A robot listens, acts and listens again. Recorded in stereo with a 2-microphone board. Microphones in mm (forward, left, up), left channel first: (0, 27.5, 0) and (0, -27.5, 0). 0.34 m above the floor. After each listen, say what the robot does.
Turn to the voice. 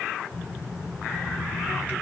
Turn 60° left.
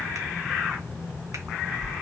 Turn 50° left.
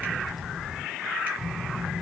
Found it: a child speaking, straight ahead, 2 to 4 m away.